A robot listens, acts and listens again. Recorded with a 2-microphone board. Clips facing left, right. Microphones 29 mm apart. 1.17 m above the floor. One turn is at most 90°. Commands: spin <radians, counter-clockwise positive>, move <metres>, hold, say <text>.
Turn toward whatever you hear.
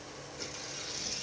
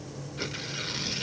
spin -0.87
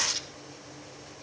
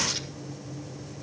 hold
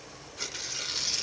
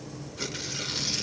say Found it: tearing paper, straight ahead.